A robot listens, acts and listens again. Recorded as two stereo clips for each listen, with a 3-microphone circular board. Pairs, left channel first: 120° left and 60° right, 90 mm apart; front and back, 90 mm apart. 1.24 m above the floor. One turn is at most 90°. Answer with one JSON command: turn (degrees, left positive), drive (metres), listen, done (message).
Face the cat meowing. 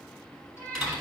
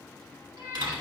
{"turn": 90}
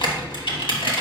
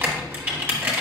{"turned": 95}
{"turn": 80}
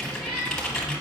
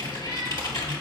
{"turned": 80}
{"turn": 15}
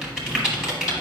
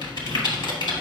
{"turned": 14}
{"listen": true}
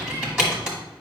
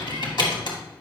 {"listen": true}
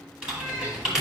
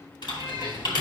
{"done": "I heard a cat meowing from this way, but can't make it out now."}